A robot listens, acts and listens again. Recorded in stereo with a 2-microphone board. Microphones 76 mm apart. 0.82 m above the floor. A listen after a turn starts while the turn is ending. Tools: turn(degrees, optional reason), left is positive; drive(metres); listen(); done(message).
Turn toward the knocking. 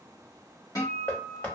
turn(degrees=25, reason="The knocking: about 25° left or 155° left.")
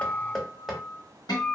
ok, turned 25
done("Found it: knocking, straight ahead, under 1 m away.")